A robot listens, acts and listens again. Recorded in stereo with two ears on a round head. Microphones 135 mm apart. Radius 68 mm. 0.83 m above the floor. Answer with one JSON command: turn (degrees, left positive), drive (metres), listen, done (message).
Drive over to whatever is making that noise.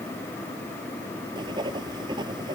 {"turn": -30}
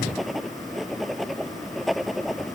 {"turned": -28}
{"drive": 1.0}
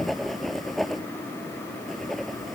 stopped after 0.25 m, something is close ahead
{"done": "Something is in my way. I am facing the writing but have not reached it."}